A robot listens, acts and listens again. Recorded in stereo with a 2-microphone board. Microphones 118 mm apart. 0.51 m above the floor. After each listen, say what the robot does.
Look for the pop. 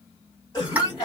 Turn 30° right.
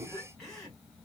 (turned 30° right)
Turn 135° right.
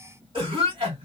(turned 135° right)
Facing where the pop came from. I can't hear it now.